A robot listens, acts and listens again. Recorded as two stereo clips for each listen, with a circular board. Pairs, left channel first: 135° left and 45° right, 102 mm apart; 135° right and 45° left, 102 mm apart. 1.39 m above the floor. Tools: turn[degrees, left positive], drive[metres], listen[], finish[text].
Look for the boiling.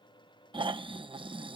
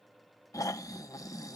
Action: listen[]
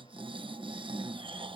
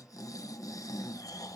Action: listen[]
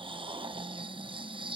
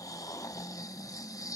Action: finish[I can't make out boiling to turn to.]